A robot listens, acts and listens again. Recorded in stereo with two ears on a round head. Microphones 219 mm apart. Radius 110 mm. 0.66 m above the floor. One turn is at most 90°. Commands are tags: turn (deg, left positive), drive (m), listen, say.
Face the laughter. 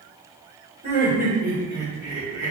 <turn deg="-15"/>
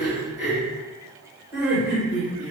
<turn deg="-30"/>
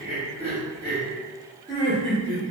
<turn deg="20"/>
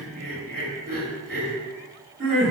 <say>Found it: laughter, straight ahead.</say>